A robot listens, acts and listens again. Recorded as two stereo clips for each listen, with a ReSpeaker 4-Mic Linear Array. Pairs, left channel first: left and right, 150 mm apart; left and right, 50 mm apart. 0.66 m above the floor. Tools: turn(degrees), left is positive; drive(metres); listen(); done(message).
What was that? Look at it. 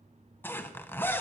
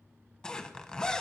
turn(degrees=30)
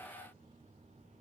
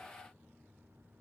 listen()
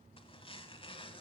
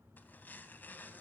listen()
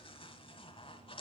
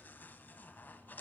turn(degrees=140)
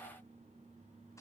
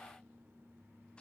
listen()
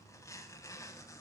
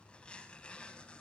turn(degrees=25)
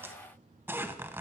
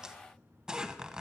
turn(degrees=-15)
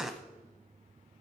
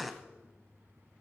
done("Found it: a zipper, straight ahead, under 1 m away.")